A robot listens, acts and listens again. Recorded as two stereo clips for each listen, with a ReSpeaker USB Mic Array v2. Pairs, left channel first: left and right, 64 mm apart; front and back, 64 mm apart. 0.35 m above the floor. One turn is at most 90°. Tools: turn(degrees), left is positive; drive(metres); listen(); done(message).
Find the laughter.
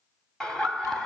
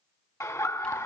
turn(degrees=15)
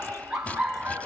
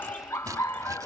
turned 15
turn(degrees=-10)
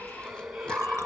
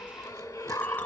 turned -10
done("Found it: laughter, straight ahead, 2 to 4 m away.")